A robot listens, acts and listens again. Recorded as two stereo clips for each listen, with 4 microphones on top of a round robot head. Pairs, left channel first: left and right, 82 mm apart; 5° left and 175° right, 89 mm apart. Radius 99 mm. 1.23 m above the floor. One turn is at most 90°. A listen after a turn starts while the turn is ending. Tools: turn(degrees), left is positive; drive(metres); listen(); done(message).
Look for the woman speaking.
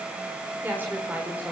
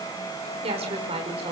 turn(degrees=-90)
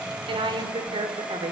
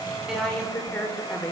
turn(degrees=-75)
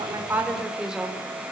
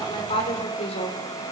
turn(degrees=-10)
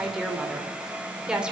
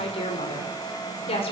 turn(degrees=-10)
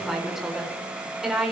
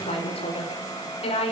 done("Found it: a woman speaking, straight ahead, over 4 m away.")